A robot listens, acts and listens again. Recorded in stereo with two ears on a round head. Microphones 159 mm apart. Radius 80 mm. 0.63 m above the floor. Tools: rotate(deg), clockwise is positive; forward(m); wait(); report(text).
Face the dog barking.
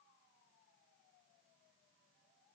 wait()
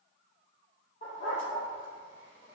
rotate(-40)
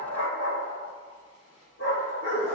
rotate(-100)
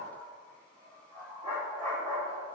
rotate(20)
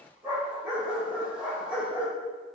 report("Found it: a dog barking, straight ahead, over 4 m away.")